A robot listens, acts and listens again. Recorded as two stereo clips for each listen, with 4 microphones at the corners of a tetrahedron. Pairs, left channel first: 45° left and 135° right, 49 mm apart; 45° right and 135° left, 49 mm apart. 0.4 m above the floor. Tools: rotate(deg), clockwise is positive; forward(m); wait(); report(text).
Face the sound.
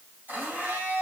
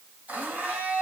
rotate(-180)
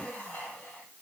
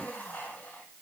report("Facing the blender.")